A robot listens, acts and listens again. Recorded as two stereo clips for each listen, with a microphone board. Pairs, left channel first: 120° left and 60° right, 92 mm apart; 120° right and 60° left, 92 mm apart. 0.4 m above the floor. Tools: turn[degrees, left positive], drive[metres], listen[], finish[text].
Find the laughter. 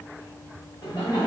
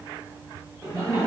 Thought: The laughter: 110° left.
Action: turn[110]
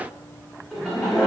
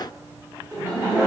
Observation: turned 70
Thought: The laughter is now 25° left.
Action: turn[25]
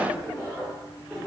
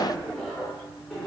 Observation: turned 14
Thought: The laughter is now 70° right.
Action: turn[-70]
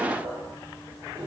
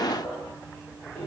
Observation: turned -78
Thought: The laughter is now 40° right.
Action: turn[-40]
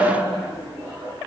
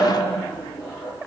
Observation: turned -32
Thought: The laughter is now 10° right.
Action: turn[-10]
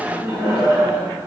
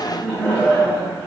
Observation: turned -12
Action: finish[Facing the laughter, 1 to 2 m away.]